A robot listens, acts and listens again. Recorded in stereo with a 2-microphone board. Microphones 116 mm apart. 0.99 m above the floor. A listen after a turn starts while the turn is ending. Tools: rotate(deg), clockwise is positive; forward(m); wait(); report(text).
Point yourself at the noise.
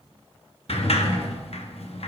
rotate(-65)
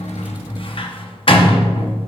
rotate(-55)
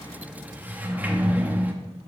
rotate(15)
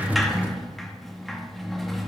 report("Facing the sliding door, under 1 m away.")